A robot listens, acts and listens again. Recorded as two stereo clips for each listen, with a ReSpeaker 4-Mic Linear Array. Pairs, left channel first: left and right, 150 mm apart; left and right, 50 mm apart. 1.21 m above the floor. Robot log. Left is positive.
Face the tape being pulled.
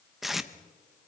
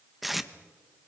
cmd yaw +30
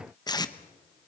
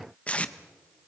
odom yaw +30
note: So it is at 155° left.
cmd yaw +155
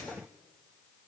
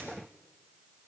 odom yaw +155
cmd idle
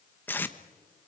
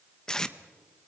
note: The tape being pulled is now 15° left.
cmd yaw +15
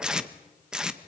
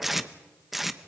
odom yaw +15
end: Found it: tape being pulled, straight ahead, 1 to 2 m away.